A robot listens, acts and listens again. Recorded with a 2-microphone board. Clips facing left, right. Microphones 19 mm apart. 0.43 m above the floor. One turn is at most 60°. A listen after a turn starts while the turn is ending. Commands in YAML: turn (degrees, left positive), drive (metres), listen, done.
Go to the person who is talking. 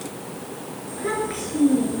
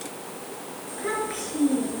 turn: 30
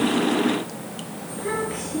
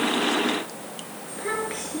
turn: -20
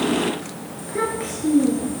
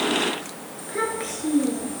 drive: 1.0
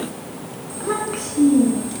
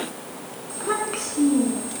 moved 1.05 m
drive: 1.0
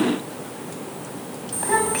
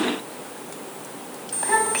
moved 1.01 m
turn: -10
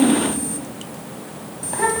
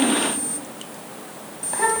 drive: 1.0
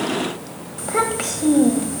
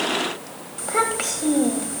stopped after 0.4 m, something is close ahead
done: "I am next to the child speaking."